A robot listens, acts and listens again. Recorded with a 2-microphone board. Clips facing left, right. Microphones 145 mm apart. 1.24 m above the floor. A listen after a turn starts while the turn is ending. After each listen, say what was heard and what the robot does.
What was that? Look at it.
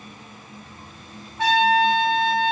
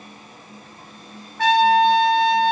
The trumpet: about 20° left or 160° left. Turn 20° left.
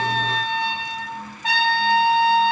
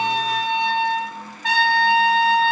So it is at 140° left. Turn 140° left.
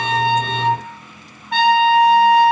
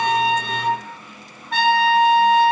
Found it: a trumpet, straight ahead.